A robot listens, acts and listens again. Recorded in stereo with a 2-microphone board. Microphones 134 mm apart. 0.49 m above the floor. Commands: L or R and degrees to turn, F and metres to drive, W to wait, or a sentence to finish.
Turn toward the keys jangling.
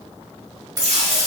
R25
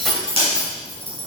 L15
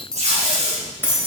L20
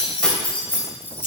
L15
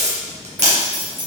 L15
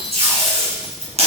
W
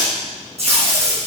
W
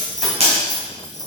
Facing the keys jangling.